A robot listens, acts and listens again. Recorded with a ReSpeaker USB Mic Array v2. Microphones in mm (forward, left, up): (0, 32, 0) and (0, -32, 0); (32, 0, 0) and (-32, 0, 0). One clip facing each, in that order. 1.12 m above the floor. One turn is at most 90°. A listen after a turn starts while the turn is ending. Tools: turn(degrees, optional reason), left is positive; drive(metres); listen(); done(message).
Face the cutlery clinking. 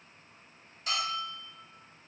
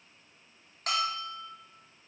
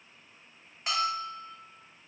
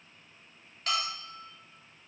listen()
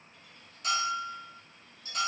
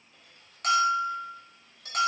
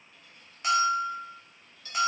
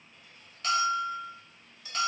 turn(degrees=-90, reason="The cutlery clinking: 105° right.")
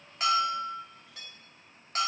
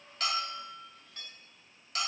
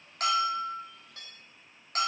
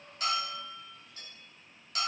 done("Found it: cutlery clinking, straight ahead, 1 to 2 m away.")